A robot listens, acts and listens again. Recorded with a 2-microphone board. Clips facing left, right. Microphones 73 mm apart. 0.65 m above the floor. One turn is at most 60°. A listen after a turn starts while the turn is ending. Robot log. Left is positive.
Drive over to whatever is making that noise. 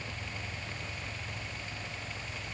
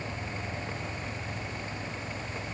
cmd idle
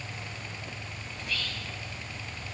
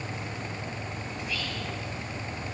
note: The whispering: about 15° right or 165° right.
cmd yaw -15
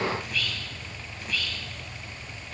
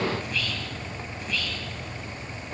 cmd fwd 1.0
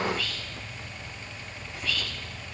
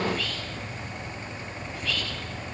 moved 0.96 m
cmd fwd 1.0
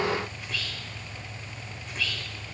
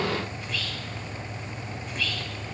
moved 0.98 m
cmd fwd 1.0
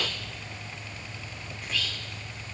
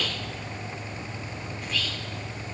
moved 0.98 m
cmd fwd 1.0
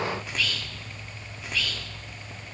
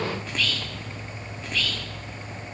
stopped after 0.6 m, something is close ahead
end: Arrived at the whispering, straight ahead.